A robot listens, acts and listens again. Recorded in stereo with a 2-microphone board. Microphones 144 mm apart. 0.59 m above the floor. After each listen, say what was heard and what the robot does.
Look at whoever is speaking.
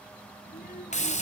Turn 90° left.
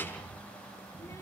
So it is at 20° left. Turn 20° left.
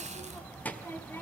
The child speaking is now 15° left. Turn 15° left.
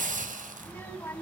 The child speaking is now 20° left. Turn 20° left.
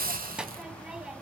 Found it: a child speaking, straight ahead, 2 to 4 m away.